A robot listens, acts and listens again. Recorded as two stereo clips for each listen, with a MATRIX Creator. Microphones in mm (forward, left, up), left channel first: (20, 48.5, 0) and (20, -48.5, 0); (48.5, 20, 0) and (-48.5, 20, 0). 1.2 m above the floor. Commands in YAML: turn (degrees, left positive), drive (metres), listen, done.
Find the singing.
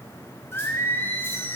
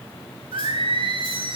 turn: 155
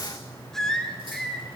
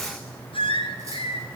done: "Found it: singing, straight ahead."